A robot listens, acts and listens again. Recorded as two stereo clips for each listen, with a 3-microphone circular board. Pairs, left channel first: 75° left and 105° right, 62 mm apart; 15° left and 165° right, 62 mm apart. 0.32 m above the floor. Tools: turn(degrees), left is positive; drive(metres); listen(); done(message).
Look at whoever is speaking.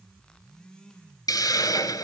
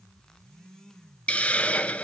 listen()
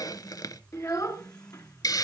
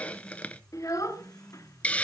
turn(degrees=45)
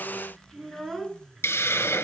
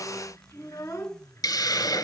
turn(degrees=-15)
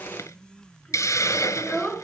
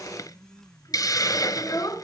done("Facing the child speaking, 2 to 4 m away.")